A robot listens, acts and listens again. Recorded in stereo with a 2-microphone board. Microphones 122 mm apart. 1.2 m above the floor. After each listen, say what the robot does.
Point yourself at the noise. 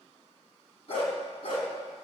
Turn 50° left.
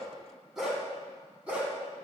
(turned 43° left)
Turn 10° right.
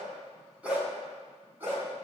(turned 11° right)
Turn 20° right.
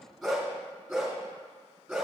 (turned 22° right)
Facing the dog barking, 2 to 4 m away.